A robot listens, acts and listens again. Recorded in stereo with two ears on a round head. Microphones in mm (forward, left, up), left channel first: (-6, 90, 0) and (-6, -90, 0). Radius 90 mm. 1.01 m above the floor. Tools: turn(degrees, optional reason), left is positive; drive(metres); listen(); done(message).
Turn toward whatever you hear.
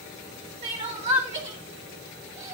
turn(degrees=-35, reason="The crying: about 35° right or 145° right.")
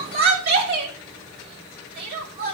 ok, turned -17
turn(degrees=-130, reason="So it is at 130° right.")
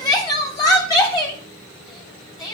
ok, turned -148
turn(degrees=20, reason="The crying is now 20° left.")
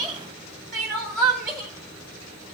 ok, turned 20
done("Facing the crying.")